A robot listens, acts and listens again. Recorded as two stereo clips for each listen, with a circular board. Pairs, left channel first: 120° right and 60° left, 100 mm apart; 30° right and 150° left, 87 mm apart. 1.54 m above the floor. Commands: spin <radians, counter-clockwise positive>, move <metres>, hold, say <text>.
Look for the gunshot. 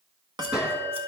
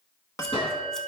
spin -0.35
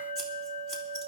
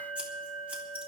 say Facing where the gunshot came from. I can't hear it now.